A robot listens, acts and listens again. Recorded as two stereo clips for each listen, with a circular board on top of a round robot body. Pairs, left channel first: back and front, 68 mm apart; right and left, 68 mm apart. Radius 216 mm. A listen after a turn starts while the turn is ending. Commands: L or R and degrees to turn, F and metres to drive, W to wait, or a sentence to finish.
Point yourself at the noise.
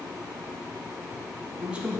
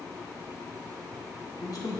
R75
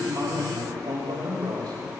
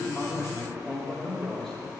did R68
Found it: a man speaking, straight ahead.